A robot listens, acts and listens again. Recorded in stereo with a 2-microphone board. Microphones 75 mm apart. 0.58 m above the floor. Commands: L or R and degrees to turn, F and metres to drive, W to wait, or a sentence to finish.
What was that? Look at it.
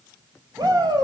R55
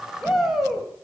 Facing the shout.